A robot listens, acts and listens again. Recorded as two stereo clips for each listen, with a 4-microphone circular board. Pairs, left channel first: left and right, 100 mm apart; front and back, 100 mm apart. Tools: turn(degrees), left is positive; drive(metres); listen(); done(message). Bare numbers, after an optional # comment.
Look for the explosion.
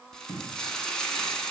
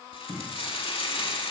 # The explosion: 145° right.
turn(-145)
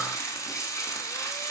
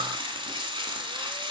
done("Facing where the explosion came from. I can't hear it now.")